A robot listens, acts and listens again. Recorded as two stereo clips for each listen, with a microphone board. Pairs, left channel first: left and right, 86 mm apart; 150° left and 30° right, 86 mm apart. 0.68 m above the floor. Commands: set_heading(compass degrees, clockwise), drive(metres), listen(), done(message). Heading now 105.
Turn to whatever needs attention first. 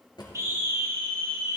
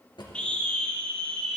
set_heading(240)
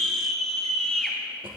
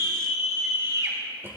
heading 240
set_heading(230)
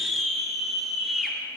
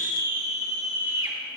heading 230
done("Facing the scream, 2 to 4 m away.")